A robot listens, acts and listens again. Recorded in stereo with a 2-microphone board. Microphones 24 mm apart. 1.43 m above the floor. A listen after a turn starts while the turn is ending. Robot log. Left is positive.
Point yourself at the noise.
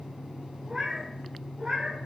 note: The cat meowing: about 55° right or 125° right.
cmd yaw -55
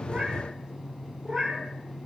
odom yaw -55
note: So it is at 40° right.
cmd yaw -40
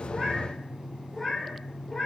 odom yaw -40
note: The cat meowing is now 20° left.
cmd yaw +20
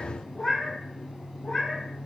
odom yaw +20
note: The cat meowing is now 15° left.
cmd yaw +15
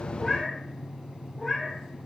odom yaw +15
end: Facing the cat meowing, 2 to 4 m away.